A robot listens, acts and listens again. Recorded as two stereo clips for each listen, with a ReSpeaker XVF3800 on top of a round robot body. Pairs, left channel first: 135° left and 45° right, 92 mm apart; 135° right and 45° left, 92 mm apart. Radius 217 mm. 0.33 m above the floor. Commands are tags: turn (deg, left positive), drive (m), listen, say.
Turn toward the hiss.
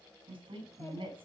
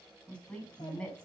<listen/>
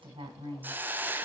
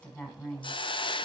<turn deg="-115"/>
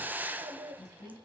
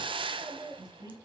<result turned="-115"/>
<turn deg="25"/>
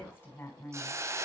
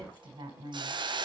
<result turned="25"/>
<turn deg="10"/>
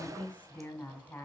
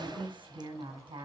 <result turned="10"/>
<listen/>
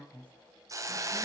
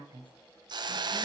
<turn deg="10"/>
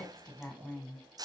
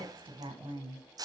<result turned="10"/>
<say>Facing the hiss.</say>